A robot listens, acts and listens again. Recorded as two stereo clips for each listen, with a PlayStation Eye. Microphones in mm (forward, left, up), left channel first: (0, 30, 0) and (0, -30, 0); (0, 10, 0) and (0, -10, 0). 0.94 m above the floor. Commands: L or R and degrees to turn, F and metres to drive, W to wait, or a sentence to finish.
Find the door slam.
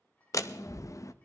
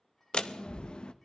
L60
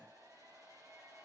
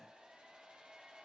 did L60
W
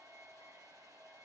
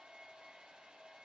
I heard a door slam, but can't make it out now. It was about straight ahead or 60° left.